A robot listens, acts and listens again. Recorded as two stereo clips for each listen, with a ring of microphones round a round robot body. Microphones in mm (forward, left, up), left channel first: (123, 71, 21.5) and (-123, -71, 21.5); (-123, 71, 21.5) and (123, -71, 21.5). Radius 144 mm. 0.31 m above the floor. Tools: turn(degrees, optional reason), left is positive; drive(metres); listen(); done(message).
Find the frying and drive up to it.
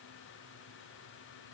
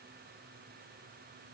listen()
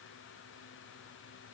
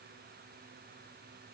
listen()
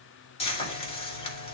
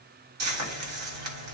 turn(degrees=-35, reason="The frying: 35° right.")
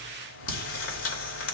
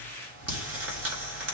drive(metres=1.0)
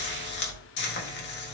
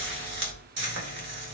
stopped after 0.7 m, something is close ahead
done("I am next to the frying.")